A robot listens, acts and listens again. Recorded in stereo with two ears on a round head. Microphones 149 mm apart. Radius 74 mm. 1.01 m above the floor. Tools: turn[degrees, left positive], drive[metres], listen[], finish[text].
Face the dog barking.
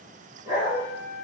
Thought: The dog barking: about 20° right or 160° right.
Action: turn[-20]
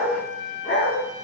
Thought: So it is at 10° left.
Action: turn[10]
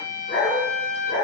Thought: The dog barking is now 10° left.
Action: turn[10]
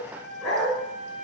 Action: finish[Facing the dog barking, 2 to 4 m away.]